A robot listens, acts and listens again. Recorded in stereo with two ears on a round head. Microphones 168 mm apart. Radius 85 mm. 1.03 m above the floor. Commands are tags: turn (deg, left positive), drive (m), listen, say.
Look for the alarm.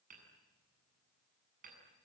<listen/>
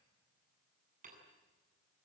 <listen/>
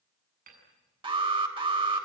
<turn deg="-30"/>
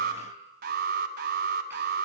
<turn deg="-120"/>
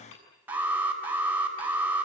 <turn deg="-10"/>
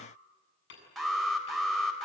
<say>Found it: an alarm, straight ahead.</say>